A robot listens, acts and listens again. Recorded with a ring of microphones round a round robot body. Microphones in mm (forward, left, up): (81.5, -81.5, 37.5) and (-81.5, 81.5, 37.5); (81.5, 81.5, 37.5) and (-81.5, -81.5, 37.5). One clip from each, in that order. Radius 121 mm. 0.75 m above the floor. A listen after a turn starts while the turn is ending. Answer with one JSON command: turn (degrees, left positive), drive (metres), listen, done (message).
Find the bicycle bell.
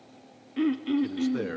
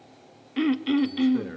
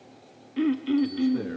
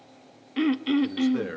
{"listen": true}
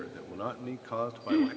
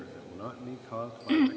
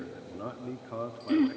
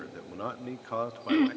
{"listen": true}
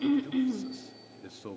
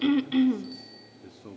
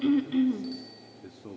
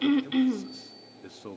{"done": "I can't make out a bicycle bell, only a man speaking and throat clearing."}